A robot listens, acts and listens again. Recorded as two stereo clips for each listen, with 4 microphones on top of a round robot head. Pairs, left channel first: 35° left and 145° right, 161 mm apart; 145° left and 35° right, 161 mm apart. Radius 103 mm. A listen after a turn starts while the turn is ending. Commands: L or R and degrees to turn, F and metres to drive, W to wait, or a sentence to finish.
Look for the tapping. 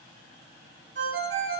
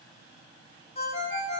W
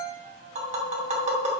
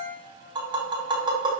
R95
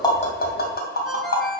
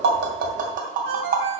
Found it: tapping, straight ahead, 2 to 4 m away.